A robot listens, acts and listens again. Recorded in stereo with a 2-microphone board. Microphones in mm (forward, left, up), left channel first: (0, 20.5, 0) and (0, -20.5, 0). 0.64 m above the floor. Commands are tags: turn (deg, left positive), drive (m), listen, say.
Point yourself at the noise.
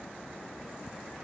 <listen/>
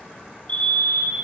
<turn deg="35"/>
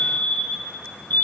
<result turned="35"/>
<turn deg="105"/>
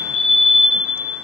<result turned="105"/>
<say>Found it: a fire alarm, straight ahead.</say>